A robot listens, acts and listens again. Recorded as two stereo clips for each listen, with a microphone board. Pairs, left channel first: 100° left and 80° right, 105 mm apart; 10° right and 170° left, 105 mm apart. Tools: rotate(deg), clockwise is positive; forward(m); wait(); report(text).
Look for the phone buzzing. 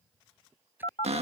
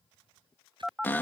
rotate(-80)
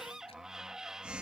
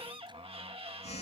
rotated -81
report("Facing the phone buzzing.")